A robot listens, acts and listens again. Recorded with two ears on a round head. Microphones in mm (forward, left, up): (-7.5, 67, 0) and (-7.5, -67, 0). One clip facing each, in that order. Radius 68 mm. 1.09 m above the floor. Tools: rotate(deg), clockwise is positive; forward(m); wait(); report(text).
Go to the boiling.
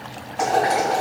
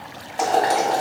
rotate(35)
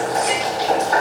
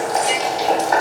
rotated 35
rotate(105)
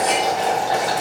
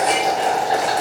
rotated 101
forward(1.0)
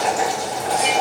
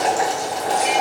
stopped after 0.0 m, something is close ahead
report("Blocked. The boiling is further on, straight ahead.")